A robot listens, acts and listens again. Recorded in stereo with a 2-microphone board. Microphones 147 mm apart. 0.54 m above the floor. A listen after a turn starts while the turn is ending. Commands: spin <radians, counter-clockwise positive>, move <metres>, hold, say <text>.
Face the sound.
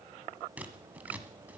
spin -0.52
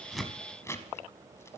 spin 0.35
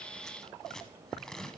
say Facing the scissors.